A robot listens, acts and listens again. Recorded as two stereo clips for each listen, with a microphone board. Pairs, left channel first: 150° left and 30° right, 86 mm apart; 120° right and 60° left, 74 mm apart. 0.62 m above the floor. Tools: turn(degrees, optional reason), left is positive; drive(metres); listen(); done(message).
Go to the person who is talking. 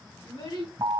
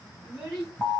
turn(degrees=140, reason="The child speaking: 140° left.")
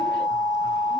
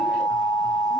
listen()
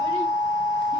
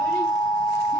listen()
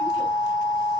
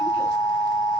done("I heard a child speaking from this way, but can't make it out now. I did not reach it.")